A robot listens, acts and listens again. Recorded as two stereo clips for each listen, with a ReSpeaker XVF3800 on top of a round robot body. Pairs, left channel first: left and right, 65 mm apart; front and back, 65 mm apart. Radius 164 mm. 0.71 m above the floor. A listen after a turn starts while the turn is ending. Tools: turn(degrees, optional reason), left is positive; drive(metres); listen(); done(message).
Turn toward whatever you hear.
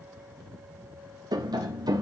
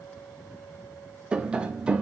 turn(degrees=-105, reason="The tapping: 105° right.")
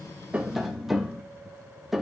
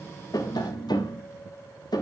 done("Found it: tapping, straight ahead.")